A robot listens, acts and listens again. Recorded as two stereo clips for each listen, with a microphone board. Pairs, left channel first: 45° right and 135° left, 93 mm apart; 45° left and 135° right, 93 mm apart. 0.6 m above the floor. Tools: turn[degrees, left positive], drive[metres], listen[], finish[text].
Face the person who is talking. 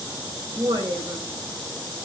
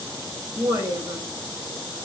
Thought: The woman speaking: 175° left.
Action: turn[175]
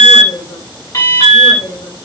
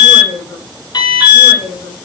Thought: The woman speaking is now 20° right.
Action: turn[-20]
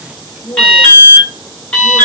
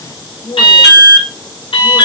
Action: finish[Found it: a woman speaking, straight ahead.]